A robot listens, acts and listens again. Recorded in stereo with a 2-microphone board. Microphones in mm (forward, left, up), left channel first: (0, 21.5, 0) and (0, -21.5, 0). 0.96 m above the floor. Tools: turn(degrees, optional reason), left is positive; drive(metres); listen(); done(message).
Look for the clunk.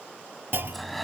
turn(degrees=-55, reason="The clunk: about 55° right or 125° right.")
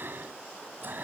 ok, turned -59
listen()
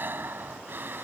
done("I heard a clunk, but can't make it out now. It was about 5° left or 65° right.")